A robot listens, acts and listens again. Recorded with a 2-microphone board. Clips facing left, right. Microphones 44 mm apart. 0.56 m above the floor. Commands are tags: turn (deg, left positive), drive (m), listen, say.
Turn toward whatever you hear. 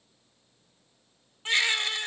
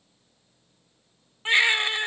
<turn deg="-25"/>
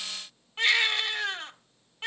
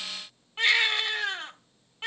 <say>Facing the baby crying.</say>